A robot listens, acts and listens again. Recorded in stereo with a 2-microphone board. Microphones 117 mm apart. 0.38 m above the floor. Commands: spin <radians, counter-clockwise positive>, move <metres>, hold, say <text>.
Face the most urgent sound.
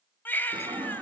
spin 0.26
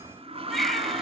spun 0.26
say Facing the baby crying.